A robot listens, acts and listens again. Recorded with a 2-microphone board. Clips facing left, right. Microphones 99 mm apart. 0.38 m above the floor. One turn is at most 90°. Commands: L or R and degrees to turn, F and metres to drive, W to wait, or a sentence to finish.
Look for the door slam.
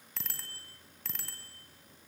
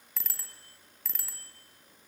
W
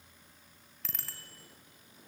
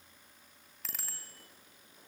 W
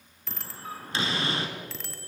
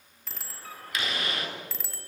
L30
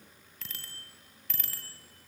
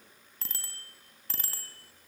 W
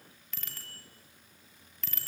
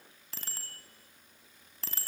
I heard a door slam, but can't make it out now. It was about straight ahead or 120° left.